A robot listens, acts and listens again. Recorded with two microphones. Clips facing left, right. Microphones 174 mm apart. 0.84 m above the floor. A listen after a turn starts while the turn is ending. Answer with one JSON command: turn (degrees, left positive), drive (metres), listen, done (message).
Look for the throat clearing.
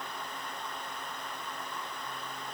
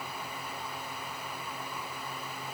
{"listen": true}
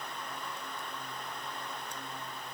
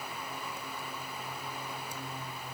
{"listen": true}
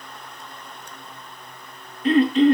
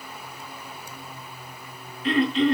{"turn": 45}
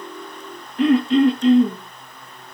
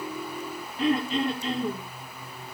{"turn": 90}
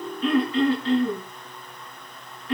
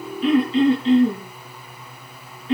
{"turn": -20}
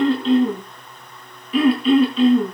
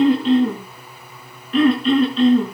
{"done": "Found it: throat clearing, straight ahead, over 4 m away."}